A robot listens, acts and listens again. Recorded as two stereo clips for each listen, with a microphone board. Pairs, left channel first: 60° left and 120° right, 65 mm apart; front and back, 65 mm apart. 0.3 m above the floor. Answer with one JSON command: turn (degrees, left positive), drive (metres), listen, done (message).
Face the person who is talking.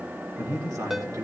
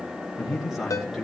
{"turn": -95}
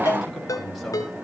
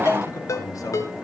{"turn": -25}
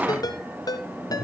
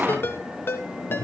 {"done": "Facing the man speaking, over 4 m away."}